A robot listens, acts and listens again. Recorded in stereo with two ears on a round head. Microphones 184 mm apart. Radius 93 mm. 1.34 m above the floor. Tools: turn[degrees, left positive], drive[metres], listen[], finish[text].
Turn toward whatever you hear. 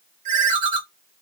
Thought: The ringtone: about 40° right or 140° right.
Action: turn[-40]
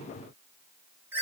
Thought: So it is at 10° right.
Action: turn[-10]
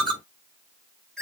Action: finish[Found it: a ringtone, straight ahead, under 1 m away.]